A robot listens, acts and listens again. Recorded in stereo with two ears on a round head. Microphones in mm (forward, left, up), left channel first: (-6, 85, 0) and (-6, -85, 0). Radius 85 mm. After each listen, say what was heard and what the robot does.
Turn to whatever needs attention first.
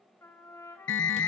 The alarm: about 70° left or 110° left. Turn 70° left.
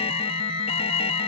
So it is at 35° left. Turn 35° left.
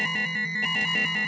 Facing the alarm, under 1 m away.